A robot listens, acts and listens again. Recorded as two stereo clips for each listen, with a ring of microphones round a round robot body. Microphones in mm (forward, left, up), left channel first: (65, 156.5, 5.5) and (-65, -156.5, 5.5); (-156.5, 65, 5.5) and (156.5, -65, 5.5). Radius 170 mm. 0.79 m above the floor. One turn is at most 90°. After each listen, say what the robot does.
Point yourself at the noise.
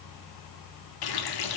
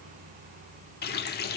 Turn 90° left.
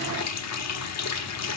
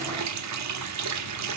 Turn 20° left.
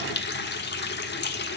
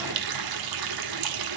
Found it: a running tap, straight ahead.